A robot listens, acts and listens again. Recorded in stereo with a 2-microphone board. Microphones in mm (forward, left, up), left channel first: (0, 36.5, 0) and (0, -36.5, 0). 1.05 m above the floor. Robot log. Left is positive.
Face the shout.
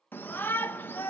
note: The shout: about 30° left or 150° left.
cmd yaw +30
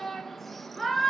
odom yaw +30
end: Facing the shout, under 1 m away.